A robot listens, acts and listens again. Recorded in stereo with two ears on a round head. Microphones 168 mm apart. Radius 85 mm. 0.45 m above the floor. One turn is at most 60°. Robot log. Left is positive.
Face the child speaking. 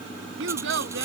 note: The child speaking: about 75° right or 105° right.
cmd yaw -60
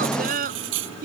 note: So it is at 50° right.
cmd yaw -50
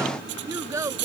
note: The child speaking is now 15° right.
cmd yaw -15
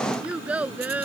note: The child speaking is now 10° right.
cmd yaw -10
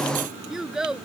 end: Found it: a child speaking, straight ahead.